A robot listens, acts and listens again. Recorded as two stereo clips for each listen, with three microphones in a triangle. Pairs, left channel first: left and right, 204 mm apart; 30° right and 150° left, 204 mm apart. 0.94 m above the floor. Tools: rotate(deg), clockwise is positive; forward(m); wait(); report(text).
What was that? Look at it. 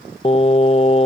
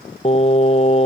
rotate(-30)
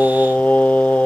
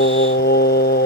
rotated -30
report("Facing the singing.")